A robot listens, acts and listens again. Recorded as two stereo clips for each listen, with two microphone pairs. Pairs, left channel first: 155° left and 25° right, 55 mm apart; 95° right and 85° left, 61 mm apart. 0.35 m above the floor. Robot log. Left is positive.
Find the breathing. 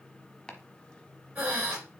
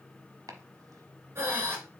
note: The breathing: 35° left.
cmd yaw +35
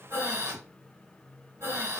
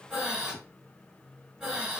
end: Found it: breathing, straight ahead, 2 to 4 m away.